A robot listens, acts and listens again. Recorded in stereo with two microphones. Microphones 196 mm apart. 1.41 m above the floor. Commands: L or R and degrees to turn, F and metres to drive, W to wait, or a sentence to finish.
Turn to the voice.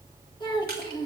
L25
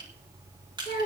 L130
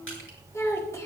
L15
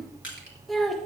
Facing the child speaking.